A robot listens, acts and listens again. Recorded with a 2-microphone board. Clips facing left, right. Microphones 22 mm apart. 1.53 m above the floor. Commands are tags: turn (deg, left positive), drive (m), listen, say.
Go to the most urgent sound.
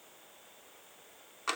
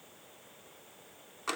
<listen/>
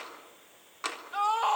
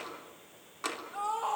<turn deg="55"/>
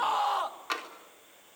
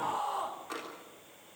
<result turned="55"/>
<turn deg="70"/>
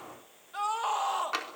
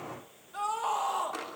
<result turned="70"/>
<turn deg="20"/>
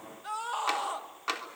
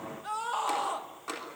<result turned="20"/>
<drive m="1.0"/>
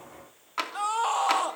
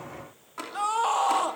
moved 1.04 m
<drive m="1.0"/>
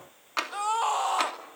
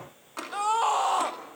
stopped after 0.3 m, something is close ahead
<say>Arrived at the scream, straight ahead.</say>